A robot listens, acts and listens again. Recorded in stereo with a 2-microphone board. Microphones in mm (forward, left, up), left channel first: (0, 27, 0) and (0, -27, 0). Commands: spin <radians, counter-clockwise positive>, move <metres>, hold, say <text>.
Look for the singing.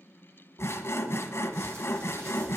hold
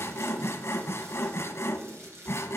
hold
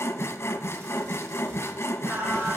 spin -0.61
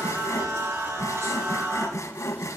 spin -2.01
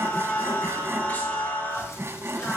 spin 0.61
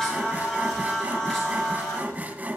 spin 0.17
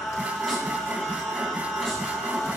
say Facing the singing, over 4 m away.